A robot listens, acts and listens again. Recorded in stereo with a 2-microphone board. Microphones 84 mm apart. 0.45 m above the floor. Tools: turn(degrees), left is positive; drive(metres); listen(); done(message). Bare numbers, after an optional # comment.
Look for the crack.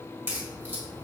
# The crack: about 30° right or 150° right.
turn(-30)
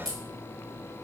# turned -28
done("Facing the crack.")